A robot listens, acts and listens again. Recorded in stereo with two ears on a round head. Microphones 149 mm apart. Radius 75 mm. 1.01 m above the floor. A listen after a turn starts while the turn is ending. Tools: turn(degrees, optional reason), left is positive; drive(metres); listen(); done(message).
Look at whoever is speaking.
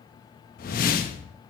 listen()
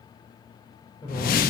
turn(degrees=25, reason="The man speaking: about 25° left or 155° left.")
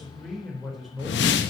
done("Found it: a man speaking, straight ahead, over 4 m away.")